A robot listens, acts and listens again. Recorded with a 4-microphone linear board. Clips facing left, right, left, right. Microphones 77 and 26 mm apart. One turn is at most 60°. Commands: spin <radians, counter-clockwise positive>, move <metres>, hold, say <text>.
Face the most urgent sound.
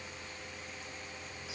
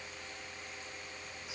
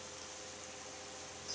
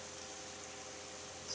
hold
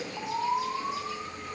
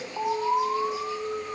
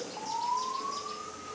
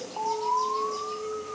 spin -1.05
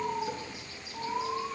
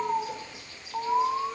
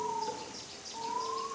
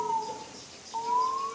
spin -0.79
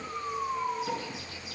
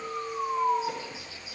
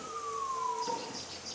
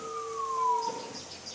say Facing the alarm, 1 to 2 m away.